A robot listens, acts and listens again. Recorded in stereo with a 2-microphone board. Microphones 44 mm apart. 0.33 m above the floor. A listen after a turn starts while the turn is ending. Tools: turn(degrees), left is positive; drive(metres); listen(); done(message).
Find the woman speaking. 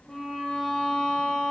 listen()
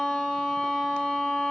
listen()
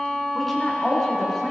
turn(degrees=30)
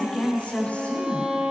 turn(degrees=145)
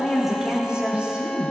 turn(degrees=-25)
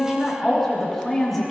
done("Found it: a woman speaking, straight ahead, over 4 m away.")